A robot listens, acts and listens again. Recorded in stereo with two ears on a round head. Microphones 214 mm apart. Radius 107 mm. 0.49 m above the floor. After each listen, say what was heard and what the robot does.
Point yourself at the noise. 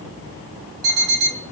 The alarm clock: about 65° right or 115° right. Turn 65° right.
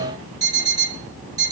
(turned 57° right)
So it is at 15° right. Turn 15° right.
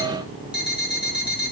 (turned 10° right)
Found it: an alarm clock, straight ahead.